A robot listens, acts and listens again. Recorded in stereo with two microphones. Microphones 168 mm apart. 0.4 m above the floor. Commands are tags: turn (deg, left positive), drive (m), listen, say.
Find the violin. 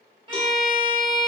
<turn deg="-30"/>
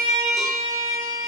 <turn deg="-115"/>
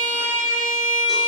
<turn deg="-20"/>
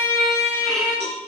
<say>Facing the violin.</say>